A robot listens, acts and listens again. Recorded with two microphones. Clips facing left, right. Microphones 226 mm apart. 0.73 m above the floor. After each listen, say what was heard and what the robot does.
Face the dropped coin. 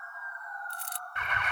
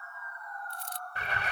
Turn 90° left.
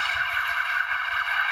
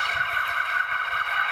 I heard a dropped coin from this way, but can't make it out now.